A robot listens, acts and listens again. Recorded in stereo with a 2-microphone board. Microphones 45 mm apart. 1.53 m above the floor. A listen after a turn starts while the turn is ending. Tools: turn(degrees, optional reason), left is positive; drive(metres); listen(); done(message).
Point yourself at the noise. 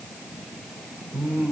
turn(degrees=-60, reason="The singing: about 60° right or 120° right.")
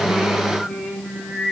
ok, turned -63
done("Found it: singing, straight ahead.")